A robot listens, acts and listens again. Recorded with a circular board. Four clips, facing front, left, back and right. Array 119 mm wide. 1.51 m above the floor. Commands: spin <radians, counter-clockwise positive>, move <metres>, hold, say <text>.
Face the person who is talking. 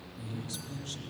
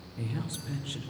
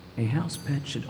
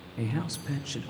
spin -2.88
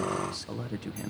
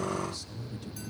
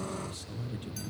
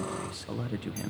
spin -0.87
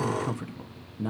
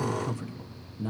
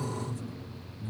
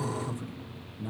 spin 0.17
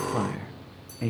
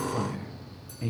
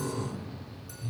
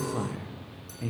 say Facing the man speaking.